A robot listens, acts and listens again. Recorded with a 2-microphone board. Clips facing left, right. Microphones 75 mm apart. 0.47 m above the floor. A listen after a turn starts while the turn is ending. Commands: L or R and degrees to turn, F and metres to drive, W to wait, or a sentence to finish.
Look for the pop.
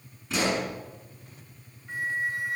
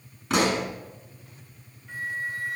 R65
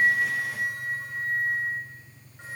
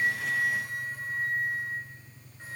W
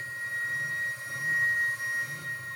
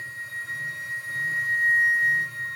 I heard a pop, but can't make it out now. It was about straight ahead or 50° right.